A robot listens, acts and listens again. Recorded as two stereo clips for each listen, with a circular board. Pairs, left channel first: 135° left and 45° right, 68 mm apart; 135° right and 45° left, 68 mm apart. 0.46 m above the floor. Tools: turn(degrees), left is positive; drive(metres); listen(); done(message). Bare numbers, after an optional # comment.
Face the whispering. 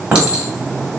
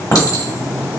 listen()
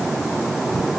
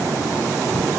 listen()
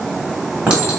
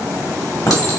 done("I can't make out whispering, only a clink.")